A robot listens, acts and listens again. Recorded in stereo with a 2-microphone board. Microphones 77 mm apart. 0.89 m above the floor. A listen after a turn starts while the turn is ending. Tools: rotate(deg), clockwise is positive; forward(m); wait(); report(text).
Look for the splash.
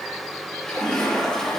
rotate(-30)
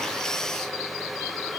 wait()
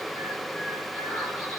report("I heard a splash, but can't make it out now. It was about 20° right or 140° left.")